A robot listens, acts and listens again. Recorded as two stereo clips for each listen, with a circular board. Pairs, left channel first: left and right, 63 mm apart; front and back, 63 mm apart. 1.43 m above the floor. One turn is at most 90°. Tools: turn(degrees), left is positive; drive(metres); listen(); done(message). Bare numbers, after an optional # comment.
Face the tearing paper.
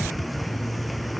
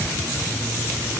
listen()
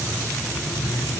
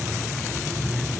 listen()
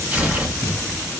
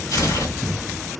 # The tearing paper: 20° right.
turn(-20)
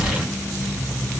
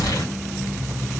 done("Found it: tearing paper, straight ahead, 2 to 4 m away.")